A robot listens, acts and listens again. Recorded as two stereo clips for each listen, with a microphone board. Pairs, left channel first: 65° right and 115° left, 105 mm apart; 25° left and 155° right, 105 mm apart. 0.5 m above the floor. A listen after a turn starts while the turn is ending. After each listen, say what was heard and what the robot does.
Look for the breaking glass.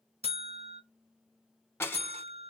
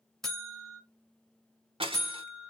The breaking glass: 135° right. Turn 135° right.
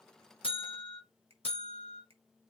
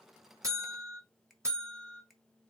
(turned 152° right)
Nothing new. It was at 20° left. Turn 20° left.
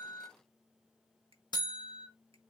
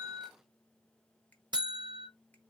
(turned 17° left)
I heard breaking glass from this way, but can't make it out now.